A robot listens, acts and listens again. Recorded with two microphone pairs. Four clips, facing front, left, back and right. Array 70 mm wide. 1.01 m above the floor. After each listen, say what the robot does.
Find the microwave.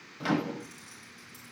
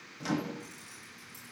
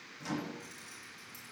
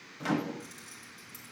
Turn 25° right.
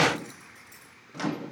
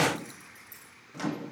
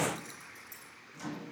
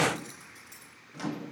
Turn 10° left.
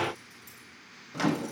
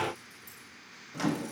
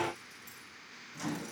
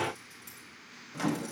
Facing the microwave, under 1 m away.